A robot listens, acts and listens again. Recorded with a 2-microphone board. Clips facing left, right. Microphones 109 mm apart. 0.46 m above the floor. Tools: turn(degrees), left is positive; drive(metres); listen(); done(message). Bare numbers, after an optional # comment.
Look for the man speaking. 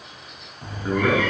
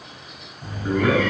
# The man speaking: about 25° left or 155° left.
turn(25)
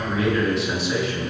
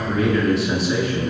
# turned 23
done("Facing the man speaking.")